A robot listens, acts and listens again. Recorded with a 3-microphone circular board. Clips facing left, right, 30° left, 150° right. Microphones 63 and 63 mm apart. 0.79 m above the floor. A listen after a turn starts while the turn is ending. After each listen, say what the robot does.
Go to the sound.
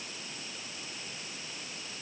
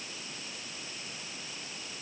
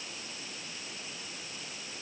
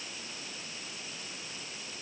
Keep listening.
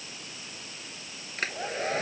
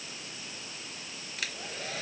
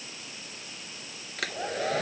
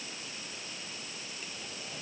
Turn 35° left.
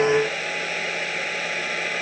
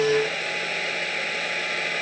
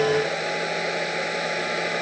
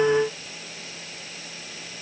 Drive 1.0 m forward.
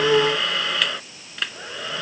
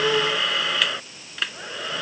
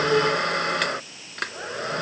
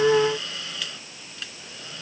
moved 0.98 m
Drive 1.0 m forward.
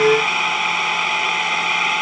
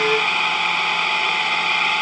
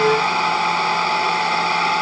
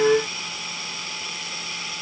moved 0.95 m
Drive 1.0 m forward.
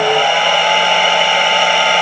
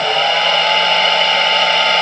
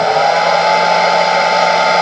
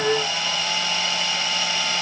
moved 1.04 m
Turn 10° left.
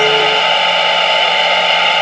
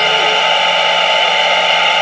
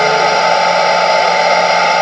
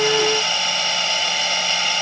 Drive 1.0 m forward.
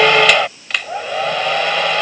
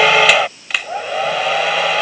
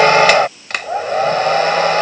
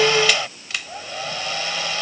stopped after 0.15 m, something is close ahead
Arrived at the hair dryer, straight ahead.